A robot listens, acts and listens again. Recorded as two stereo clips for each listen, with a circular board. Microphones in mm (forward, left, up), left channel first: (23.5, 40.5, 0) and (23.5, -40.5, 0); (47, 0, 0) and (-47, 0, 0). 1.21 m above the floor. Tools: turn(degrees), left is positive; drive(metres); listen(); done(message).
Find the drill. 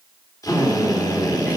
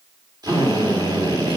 turn(degrees=135)
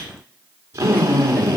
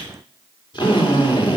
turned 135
turn(degrees=-35)
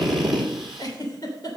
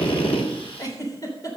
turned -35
done("Facing the drill.")